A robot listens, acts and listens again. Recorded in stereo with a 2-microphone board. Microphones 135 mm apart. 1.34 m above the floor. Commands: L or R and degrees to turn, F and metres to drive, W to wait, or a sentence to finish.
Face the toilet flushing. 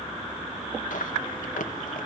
W
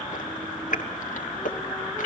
W
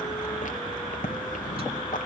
I can't make out a toilet flushing, only chewing.